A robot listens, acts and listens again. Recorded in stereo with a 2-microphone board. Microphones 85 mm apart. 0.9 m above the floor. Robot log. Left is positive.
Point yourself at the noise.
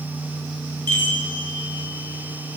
note: The chime: about 60° right or 120° right.
cmd yaw -60
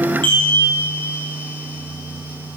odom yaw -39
note: So it is at 80° right.
cmd yaw -80
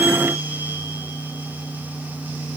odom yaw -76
cmd idle
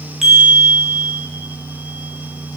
end: Facing the chime, 1 to 2 m away.